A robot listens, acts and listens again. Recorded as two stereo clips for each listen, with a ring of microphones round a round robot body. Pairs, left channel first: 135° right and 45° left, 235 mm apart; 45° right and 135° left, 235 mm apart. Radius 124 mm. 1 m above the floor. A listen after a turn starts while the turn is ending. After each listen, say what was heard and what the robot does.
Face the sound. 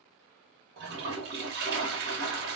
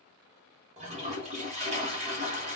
The toilet flushing: 80° left. Turn 80° left.
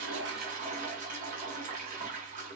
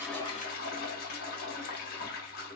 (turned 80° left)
Found it: a toilet flushing, straight ahead.